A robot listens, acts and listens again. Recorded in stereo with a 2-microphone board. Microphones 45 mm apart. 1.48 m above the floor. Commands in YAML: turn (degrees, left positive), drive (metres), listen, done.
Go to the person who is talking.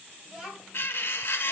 turn: -20
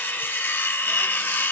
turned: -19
listen: true
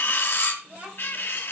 turn: -140
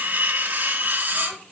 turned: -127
turn: -15
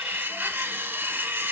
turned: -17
listen: true
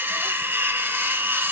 done: "Facing where the child speaking came from. I can't hear it now. I did not reach it."